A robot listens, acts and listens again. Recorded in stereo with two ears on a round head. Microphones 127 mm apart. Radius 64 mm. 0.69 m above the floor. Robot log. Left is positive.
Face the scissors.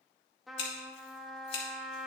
note: The scissors: about 45° left or 135° left.
cmd yaw +45
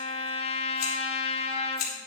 note: So it is at 80° left.
cmd yaw +80
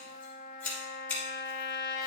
note: The scissors is now 10° left.
cmd yaw +10
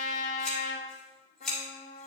end: Found it: scissors, straight ahead.